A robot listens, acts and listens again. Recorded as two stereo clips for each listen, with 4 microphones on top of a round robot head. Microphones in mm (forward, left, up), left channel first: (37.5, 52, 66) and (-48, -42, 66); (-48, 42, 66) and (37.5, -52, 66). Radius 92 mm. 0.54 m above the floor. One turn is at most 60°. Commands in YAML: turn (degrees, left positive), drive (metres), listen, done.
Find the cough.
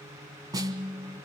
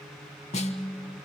listen: true
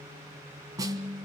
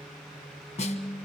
listen: true
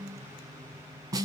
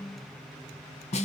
done: "I can't make out a cough, only a snare drum."